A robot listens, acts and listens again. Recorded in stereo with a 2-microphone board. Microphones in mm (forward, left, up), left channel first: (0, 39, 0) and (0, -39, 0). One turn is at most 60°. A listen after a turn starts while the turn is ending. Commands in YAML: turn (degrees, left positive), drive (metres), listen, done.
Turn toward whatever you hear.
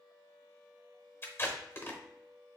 turn: 30
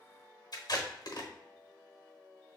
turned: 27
turn: 60
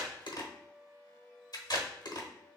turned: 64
turn: 55
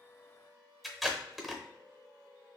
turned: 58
done: "Facing the tape being pulled."